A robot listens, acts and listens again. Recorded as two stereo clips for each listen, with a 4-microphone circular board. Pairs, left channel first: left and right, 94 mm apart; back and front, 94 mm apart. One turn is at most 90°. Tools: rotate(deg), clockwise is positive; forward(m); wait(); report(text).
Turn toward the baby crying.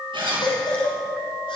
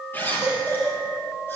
rotate(-90)
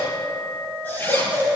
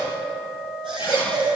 rotate(-20)
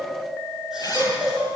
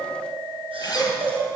report("Found it: a baby crying, straight ahead, over 4 m away.")